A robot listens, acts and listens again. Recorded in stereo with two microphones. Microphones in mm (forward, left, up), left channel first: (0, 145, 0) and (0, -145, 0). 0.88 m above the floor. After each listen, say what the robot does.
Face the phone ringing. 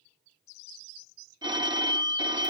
Turn 15° right.
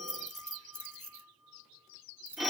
Facing the phone ringing.